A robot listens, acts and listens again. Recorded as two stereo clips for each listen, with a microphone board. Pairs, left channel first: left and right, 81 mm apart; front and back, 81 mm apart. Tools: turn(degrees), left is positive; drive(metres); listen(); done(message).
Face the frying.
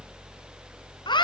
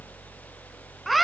listen()
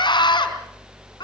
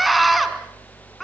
listen()
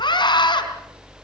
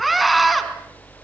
done("I can't make out frying, only a scream.")